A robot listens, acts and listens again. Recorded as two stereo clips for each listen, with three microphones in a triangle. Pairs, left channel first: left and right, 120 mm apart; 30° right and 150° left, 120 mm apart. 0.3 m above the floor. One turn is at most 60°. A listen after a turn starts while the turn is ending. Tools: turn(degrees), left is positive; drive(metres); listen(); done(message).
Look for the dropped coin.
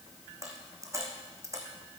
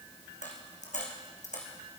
turn(degrees=-25)
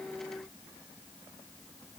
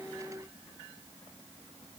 done("Facing where the dropped coin came from. I can't hear it now.")